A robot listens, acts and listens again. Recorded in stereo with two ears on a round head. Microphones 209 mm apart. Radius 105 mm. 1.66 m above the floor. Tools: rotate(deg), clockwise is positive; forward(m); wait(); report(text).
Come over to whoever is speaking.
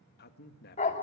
rotate(-45)
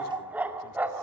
wait()
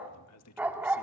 rotate(-85)
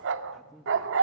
forward(1.0)
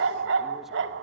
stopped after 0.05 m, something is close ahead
wait()
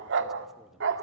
wait()
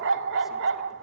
report("Facing where the man speaking came from. I can't hear it now. I did not reach it.")